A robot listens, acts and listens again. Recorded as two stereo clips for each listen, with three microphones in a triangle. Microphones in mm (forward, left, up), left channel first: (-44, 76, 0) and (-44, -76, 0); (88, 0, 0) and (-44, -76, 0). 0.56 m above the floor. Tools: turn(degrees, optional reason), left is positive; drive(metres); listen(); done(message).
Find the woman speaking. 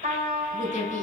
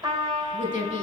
turn(degrees=55, reason="The woman speaking: 55° left.")
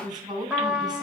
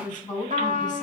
turn(degrees=-30, reason="The woman speaking is now 30° right.")
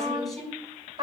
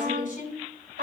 done("Found it: a woman speaking, straight ahead, over 4 m away.")